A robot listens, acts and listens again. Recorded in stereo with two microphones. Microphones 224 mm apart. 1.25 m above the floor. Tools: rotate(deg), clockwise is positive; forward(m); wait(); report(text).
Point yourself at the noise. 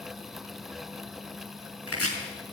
rotate(-90)
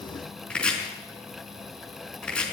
report("Found it: chopping, straight ahead.")